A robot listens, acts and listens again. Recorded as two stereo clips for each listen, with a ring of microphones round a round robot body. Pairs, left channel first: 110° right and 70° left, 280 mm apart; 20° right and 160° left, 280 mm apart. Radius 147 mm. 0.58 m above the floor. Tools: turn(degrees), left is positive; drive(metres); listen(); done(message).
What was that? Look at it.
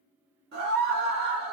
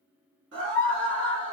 turn(degrees=115)
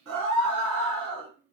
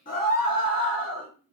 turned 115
turn(degrees=35)
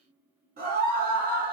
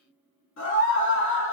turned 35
turn(degrees=15)
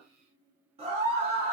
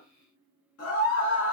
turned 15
done("Found it: a scream, straight ahead.")